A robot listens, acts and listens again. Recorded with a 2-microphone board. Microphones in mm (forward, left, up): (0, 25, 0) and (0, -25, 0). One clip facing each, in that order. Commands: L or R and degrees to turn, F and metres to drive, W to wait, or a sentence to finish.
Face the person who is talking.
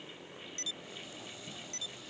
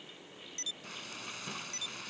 W
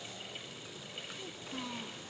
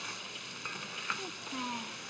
R30
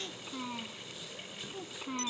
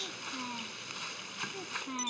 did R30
Found it: a child speaking, straight ahead.